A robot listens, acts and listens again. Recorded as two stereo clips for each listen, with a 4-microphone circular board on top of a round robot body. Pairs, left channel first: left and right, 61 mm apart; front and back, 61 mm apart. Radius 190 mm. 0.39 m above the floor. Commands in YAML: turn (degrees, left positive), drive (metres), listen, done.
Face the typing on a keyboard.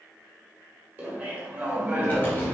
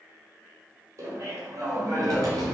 turn: 150
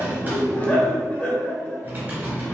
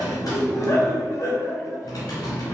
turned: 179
turn: -30
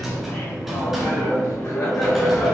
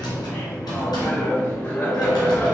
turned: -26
done: "Found it: typing on a keyboard, straight ahead."